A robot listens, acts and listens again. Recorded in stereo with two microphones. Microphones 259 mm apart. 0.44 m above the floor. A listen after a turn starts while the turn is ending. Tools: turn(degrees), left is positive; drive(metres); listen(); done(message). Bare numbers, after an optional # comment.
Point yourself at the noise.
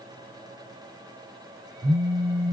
# The phone buzzing: about 65° right or 115° right.
turn(-65)
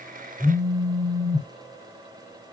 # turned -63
# So it is at 35° right.
turn(-35)
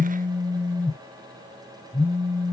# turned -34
done("Facing the phone buzzing, 2 to 4 m away.")